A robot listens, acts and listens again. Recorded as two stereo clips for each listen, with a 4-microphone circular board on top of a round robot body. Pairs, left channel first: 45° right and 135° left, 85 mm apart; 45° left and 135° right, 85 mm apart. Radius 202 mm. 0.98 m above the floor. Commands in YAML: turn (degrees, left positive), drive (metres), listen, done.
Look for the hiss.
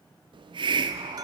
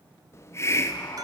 turn: 105
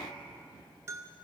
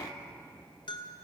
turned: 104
done: "Found it: a hiss, straight ahead, 1 to 2 m away."